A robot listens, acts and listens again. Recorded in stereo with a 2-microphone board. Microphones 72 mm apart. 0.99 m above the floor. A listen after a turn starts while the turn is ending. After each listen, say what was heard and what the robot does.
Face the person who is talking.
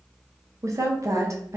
The woman speaking: about 45° right or 135° right. Turn 45° right.
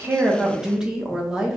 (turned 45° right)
So it is at 10° right. Turn 10° right.
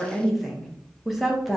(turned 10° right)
Facing the woman speaking.